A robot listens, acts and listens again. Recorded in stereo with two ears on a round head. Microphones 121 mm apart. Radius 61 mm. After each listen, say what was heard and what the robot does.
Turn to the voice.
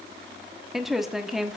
Turn 30° left.
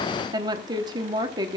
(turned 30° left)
So it is at 30° right. Turn 30° right.
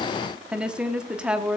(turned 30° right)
Found it: a woman speaking, straight ahead.